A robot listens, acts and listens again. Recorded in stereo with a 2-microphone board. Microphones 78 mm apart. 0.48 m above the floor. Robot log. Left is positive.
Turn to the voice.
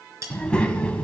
cmd yaw +30
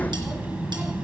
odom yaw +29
note: So it is at 15° right.
cmd yaw -15
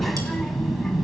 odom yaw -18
end: Facing the child speaking, 2 to 4 m away.